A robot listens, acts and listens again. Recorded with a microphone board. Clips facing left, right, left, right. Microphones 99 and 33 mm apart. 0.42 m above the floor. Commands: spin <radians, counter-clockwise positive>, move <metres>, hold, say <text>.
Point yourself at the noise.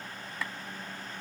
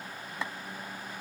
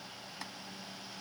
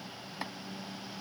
spin -0.44
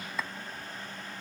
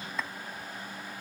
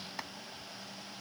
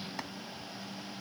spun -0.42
say Found it: chopping, straight ahead.